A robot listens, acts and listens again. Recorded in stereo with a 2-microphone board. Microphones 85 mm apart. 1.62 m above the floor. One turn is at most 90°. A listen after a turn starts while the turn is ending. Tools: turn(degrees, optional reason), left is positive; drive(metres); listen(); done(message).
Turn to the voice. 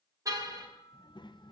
turn(degrees=65, reason="The child speaking: about 65° left or 115° left.")
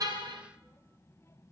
turn(degrees=35, reason="So it is at 35° left.")
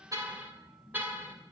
done("Found it: a child speaking, straight ahead, 1 to 2 m away.")